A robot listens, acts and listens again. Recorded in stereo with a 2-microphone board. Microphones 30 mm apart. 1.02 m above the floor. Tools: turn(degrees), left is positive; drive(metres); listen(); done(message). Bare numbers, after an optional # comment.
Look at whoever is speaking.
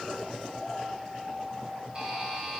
listen()
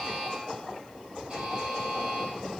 listen()
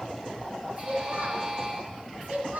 turn(-90)
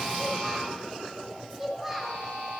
done("Found it: a child speaking, straight ahead, 2 to 4 m away.")